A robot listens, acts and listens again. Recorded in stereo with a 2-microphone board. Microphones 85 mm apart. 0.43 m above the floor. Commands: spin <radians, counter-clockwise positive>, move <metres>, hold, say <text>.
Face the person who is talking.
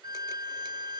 hold
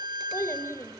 spin 0.61
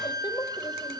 spin 1.83
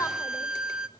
hold
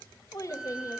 spin 0.79
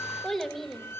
say Facing the child speaking, 1 to 2 m away.